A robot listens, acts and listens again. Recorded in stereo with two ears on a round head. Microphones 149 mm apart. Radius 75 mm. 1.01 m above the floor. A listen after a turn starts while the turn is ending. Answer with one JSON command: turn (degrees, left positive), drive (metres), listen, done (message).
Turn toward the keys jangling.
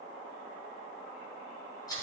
{"listen": true}
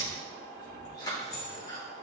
{"turn": 55}
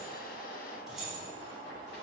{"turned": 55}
{"done": "Found it: keys jangling, straight ahead."}